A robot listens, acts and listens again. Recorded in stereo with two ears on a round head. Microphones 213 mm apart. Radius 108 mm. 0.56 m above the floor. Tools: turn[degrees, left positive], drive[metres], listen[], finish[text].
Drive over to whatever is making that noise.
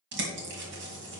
Thought: The bird: about 50° right or 130° right.
Action: turn[-50]
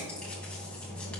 Action: drive[1.0]
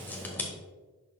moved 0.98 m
Thought: The bird is now 10° left.
Action: turn[10]
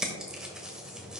Action: drive[1.0]
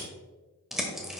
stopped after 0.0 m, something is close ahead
Action: finish[Arrived at the bird, straight ahead.]